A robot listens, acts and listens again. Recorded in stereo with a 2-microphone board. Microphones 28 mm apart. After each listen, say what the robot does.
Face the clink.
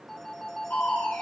Keep listening.
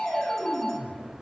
Keep listening.
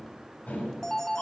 I can't make out a clink to turn to.